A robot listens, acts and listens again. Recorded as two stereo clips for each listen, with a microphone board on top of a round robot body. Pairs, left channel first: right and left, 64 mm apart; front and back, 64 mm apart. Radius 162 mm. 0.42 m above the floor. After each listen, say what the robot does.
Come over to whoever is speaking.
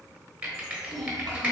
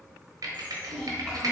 Turn 80° left.
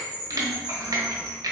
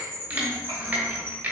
Keep listening.
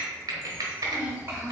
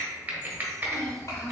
Turn 35° left.
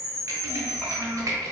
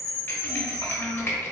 Turn 25° right.
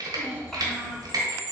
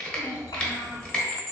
Drive 1.0 m forward.
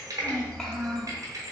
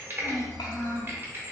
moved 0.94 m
Turn 10° right.
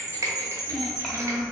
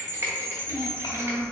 Drive 1.0 m forward.
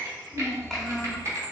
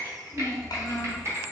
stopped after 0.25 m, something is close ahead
Arrived at the child speaking, straight ahead.